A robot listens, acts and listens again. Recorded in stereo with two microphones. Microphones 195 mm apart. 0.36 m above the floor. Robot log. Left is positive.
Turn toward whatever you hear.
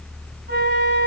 cmd yaw -90
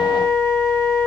end: Facing the flute.